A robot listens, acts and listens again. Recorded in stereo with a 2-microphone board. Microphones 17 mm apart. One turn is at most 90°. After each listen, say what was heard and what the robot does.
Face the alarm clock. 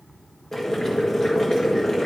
Keep listening.
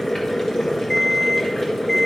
Turn 30° left.
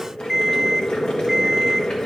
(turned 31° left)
So it is at 25° right. Turn 25° right.
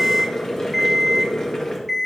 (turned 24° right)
Found it: an alarm clock, straight ahead.